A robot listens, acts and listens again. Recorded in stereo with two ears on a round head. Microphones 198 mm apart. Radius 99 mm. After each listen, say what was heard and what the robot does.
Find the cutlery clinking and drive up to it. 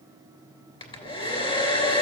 Keep listening.
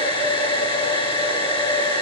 Keep listening.
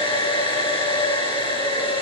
I can't make out cutlery clinking to turn to.